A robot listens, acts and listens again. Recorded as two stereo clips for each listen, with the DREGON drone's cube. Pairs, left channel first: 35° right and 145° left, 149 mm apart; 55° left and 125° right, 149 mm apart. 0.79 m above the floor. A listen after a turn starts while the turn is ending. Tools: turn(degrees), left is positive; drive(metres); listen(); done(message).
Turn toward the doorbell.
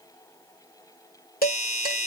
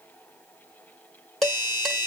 done("Found it: a doorbell, straight ahead, 1 to 2 m away.")